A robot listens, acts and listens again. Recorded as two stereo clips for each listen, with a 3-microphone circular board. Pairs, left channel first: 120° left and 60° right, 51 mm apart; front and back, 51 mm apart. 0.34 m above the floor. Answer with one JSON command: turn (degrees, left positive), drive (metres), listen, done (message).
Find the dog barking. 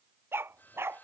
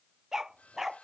{"turn": -95}
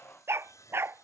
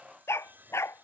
{"turn": -20}
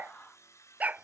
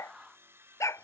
{"done": "Facing the dog barking."}